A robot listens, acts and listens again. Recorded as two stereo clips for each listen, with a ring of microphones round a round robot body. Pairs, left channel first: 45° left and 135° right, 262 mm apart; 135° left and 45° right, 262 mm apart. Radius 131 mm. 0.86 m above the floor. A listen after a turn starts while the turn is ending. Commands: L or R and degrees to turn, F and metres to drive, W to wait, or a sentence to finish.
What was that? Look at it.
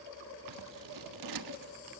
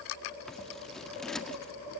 R135
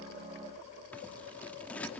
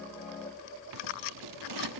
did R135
R40
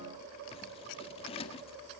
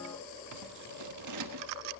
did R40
R25
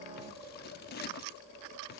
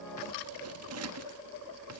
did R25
R10
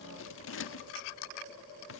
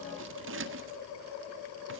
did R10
Found it: scissors, straight ahead.